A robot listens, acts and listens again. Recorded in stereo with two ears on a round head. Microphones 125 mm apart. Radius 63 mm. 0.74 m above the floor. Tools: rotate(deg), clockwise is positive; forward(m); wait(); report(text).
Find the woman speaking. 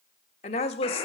rotate(-40)
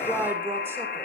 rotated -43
rotate(15)
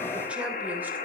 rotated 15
wait()
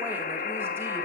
wait()
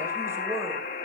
rotate(20)
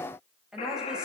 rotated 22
report("Facing the woman speaking.")